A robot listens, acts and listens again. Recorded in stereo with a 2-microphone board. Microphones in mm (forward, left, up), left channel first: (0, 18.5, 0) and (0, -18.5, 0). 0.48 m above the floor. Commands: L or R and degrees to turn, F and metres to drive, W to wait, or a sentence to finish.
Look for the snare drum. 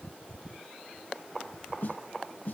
L50
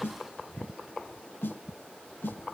L85
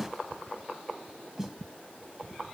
Facing the snare drum, 1 to 2 m away.